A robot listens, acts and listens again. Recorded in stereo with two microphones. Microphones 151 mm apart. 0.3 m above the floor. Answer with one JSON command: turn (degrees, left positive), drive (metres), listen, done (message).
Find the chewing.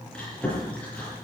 {"turn": 30}
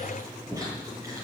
{"turn": -25}
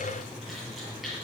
{"done": "Facing the chewing."}